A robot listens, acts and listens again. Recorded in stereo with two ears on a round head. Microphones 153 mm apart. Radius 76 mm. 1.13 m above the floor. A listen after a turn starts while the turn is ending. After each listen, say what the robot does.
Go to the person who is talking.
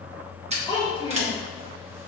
Turn 30° left.
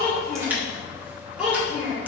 Drive 1.0 m forward.
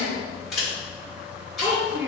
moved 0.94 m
Turn 10° right.
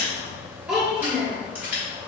Drive 1.0 m forward.
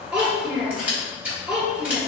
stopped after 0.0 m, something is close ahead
I am next to the child speaking.